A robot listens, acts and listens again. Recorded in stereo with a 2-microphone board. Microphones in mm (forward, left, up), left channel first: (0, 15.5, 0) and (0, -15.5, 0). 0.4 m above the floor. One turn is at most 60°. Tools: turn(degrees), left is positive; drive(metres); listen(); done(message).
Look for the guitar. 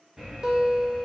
turn(degrees=-25)
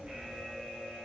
listen()
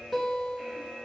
done("Found it: a guitar, straight ahead.")